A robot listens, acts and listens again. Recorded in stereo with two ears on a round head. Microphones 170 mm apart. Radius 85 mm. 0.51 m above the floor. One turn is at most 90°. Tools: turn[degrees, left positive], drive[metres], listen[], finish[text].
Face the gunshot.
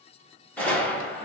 Action: turn[30]
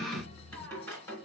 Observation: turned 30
Action: listen[]
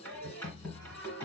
Action: finish[I heard a gunshot, but can't make it out now. It was about 20° right or 140° left.]